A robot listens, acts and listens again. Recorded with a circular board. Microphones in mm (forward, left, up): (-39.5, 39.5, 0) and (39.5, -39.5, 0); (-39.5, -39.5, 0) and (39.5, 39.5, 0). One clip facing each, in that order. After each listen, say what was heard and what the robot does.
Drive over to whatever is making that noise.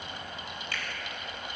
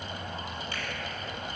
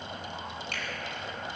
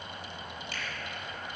The finger snap: 110° right. Turn 110° right.
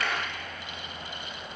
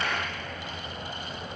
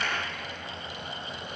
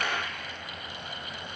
The finger snap is now 20° left. Turn 20° left.
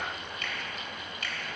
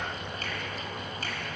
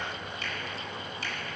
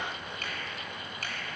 The finger snap is now 10° left. Turn 10° left.
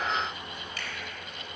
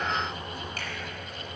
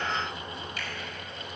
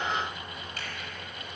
Keep listening.
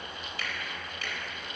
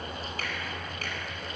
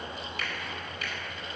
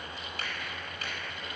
Drive 1.0 m forward.
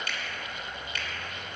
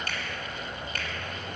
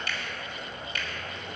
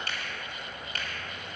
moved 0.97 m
Drive 1.0 m forward.
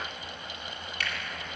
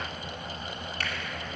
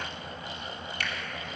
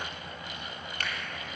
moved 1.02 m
Drive 1.0 m forward.
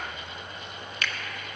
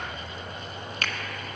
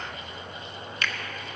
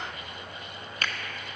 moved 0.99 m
Drive 1.0 m forward.
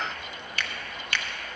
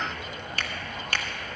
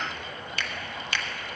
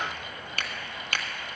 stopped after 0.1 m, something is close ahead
I am next to the finger snap.